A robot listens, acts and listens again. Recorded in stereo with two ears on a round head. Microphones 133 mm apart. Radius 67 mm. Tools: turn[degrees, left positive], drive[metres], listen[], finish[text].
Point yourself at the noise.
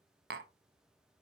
Thought: The tapping: about 75° right or 105° right.
Action: turn[-75]
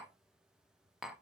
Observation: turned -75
Action: finish[Found it: tapping, straight ahead.]